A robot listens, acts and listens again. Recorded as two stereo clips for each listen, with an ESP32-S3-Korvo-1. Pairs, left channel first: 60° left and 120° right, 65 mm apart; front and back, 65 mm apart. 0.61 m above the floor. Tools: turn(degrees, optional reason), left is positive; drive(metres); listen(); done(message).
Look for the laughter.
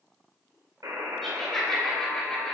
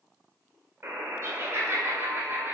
turn(degrees=145, reason="The laughter: 145° left.")
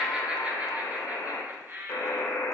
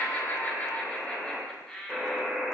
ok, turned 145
turn(degrees=-80, reason="The laughter is now 80° right.")
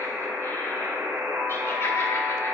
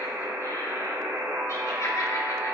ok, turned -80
listen()
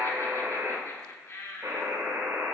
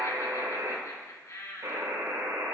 turn(degrees=20, reason="The laughter is now 20° left.")
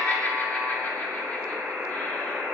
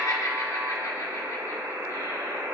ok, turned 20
done("Facing the laughter, 1 to 2 m away.")